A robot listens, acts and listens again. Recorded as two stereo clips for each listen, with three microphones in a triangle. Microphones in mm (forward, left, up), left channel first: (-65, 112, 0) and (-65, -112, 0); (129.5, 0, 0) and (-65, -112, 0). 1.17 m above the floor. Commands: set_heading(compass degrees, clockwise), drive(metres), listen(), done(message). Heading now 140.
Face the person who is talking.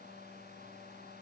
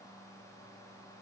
listen()
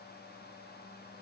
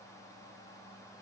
listen()
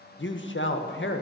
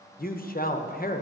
set_heading(70)
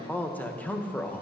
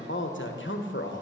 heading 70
set_heading(60)
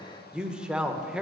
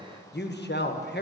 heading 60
done("Found it: a man speaking, straight ahead.")